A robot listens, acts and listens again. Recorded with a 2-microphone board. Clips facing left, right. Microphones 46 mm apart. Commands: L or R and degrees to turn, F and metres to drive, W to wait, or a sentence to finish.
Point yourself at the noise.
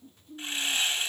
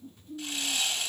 L30
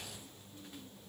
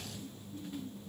W
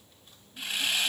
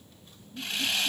Found it: sawing, straight ahead, 2 to 4 m away.